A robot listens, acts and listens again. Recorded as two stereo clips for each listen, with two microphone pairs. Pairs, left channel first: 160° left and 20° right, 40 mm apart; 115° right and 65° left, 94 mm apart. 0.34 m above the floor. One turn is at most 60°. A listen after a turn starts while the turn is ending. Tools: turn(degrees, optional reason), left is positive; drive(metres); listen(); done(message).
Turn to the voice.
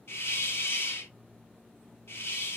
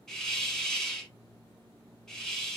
listen()
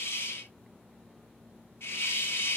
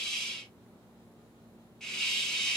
listen()
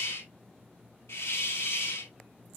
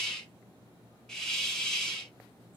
done("I can't make out anyone speaking to turn to.")